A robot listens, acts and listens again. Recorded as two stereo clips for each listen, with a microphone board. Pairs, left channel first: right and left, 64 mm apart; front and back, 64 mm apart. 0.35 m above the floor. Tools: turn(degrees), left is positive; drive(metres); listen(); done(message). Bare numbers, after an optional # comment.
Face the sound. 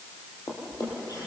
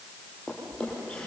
# The drawer: 75° right.
turn(-75)
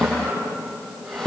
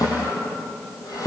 done("Facing the drawer.")